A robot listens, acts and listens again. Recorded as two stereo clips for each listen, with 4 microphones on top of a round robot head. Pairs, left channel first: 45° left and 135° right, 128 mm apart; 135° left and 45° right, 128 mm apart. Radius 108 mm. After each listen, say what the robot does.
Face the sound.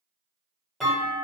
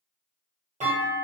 Turn 45° right.
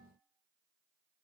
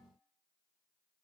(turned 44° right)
Facing where the clunk came from. I can't hear it now.